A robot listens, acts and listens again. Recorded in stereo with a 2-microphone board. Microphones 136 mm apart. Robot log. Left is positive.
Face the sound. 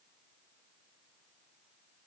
cmd idle
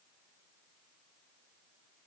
cmd idle
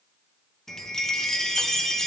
cmd yaw +30
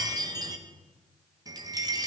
note: So it is at 30° right.
cmd yaw -30
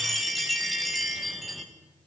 end: Found it: a chime, straight ahead, under 1 m away.